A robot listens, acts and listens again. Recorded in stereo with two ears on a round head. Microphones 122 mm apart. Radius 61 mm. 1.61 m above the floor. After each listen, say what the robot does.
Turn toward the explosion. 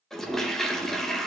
Keep listening.
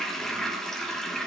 Keep listening.
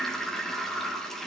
I can't make out an explosion, only a toilet flushing.